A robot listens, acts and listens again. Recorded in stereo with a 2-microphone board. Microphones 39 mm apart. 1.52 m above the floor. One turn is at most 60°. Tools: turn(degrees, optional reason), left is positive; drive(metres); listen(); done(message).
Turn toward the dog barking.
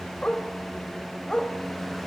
turn(degrees=25, reason="The dog barking: about 25° left or 155° left.")
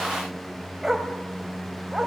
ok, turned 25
turn(degrees=-15, reason="So it is at 15° right.")
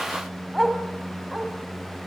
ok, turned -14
done("Facing the dog barking, 2 to 4 m away.")